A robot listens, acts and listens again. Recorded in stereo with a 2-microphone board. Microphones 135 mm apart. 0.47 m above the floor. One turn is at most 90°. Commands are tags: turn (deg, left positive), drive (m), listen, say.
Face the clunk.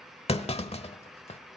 <turn deg="50"/>
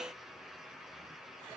<listen/>
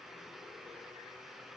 <say>I heard a clunk, but can't make it out now. It was about straight ahead or 80° left.</say>